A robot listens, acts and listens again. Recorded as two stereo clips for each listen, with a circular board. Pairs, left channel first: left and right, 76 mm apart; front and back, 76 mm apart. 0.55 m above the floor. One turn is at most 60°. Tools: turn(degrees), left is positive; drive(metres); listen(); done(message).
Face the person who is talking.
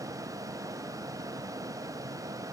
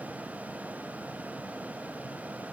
listen()
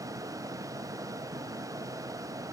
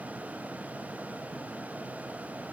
listen()
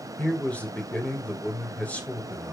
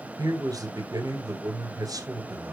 turn(degrees=60)
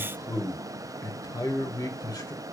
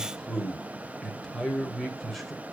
turn(degrees=60)
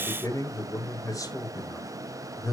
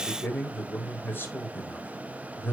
turn(degrees=55)
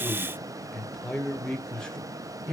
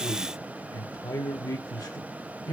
turn(degrees=10)
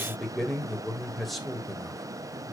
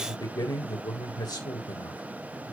done("Found it: a man speaking, straight ahead.")